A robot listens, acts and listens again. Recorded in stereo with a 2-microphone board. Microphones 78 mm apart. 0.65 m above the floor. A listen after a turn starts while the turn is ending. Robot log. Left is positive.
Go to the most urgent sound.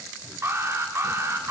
note: The alarm: about 35° right or 145° right.
cmd yaw -35
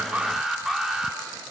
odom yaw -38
cmd fwd 1.0
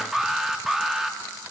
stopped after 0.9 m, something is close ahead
end: Arrived at the alarm, straight ahead.